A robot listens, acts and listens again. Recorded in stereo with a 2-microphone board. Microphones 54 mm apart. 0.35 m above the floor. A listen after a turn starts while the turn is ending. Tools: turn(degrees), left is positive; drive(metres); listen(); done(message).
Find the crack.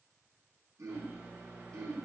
listen()
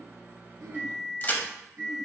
turn(degrees=35)
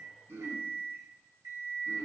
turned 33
listen()
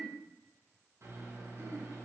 done("I heard a crack, but can't make it out now. It was about straight ahead or 110° left.")